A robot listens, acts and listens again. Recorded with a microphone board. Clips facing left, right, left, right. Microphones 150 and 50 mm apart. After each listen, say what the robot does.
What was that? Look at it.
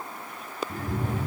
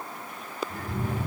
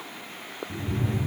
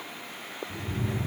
Turn 90° left.
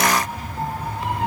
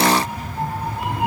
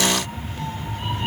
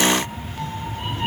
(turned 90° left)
Turn 10° right.
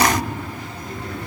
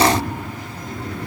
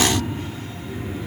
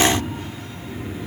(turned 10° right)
Found it: a cat meowing, straight ahead, over 4 m away.